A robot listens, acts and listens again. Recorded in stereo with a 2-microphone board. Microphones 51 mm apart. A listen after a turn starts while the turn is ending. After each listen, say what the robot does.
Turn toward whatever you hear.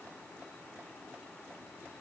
Keep listening.
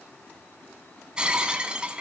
Turn 20° right.
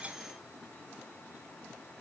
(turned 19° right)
Keep listening.
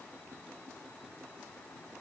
I heard breaking glass, but can't make it out now. It was about straight ahead or 140° right.